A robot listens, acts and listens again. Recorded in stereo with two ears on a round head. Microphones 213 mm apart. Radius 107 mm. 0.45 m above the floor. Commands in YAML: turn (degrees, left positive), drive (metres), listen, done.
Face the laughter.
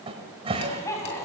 turn: 30
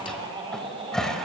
turn: -25
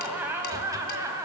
turn: -15
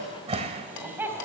turn: -10
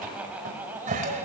turn: -10
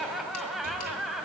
done: "Found it: laughter, straight ahead, 2 to 4 m away."